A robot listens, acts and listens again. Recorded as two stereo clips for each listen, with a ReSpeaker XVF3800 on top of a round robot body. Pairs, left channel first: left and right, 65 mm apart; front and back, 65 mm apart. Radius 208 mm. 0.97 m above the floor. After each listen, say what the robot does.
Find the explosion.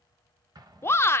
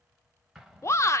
Turn 90° right.
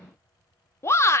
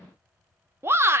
I heard an explosion from this way, but can't make it out now.